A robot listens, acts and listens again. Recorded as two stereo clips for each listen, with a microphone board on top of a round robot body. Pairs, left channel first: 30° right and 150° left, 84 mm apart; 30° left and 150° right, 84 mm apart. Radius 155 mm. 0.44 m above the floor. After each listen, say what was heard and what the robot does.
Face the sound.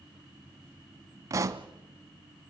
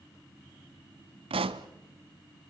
The pop: 155° right. Turn 155° right.
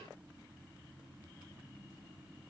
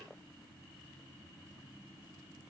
I heard a pop from this way, but can't make it out now.